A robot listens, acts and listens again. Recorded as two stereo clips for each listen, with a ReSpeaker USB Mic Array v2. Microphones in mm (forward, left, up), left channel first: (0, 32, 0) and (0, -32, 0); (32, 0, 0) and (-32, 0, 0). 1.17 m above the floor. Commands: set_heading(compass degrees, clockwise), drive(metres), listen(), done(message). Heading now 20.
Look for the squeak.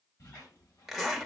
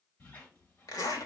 set_heading(315)
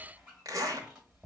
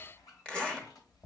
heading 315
set_heading(325)
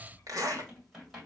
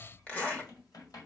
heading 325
done("Found it: a squeak, straight ahead.")